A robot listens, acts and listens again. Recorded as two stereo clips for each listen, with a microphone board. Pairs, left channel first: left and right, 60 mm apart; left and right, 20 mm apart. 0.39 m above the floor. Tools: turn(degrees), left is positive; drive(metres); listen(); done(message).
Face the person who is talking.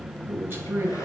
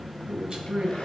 turn(degrees=-40)
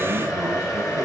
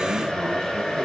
listen()
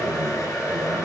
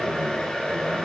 listen()
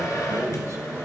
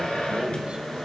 done("I heard a man speaking, but can't make it out now. It was about straight ahead or 100° right.")